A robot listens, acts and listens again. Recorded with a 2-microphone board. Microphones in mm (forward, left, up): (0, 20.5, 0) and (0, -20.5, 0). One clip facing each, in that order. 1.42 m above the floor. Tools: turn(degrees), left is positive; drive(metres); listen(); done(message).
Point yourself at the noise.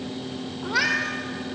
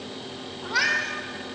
turn(degrees=30)
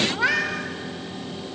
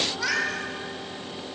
turn(degrees=145)
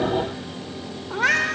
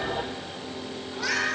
turn(degrees=45)
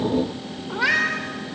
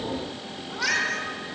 turn(degrees=25)
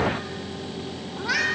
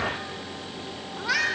done("Found it: a cat meowing, straight ahead, 2 to 4 m away.")